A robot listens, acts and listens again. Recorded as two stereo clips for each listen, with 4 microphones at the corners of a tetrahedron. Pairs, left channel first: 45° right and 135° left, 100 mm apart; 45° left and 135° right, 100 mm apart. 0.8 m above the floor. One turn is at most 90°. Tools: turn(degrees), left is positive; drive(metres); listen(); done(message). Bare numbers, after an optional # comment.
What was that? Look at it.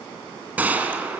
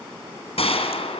# The gunshot: 60° left.
turn(60)
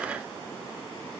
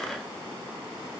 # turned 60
done("I heard a gunshot from this way, but can't make it out now.")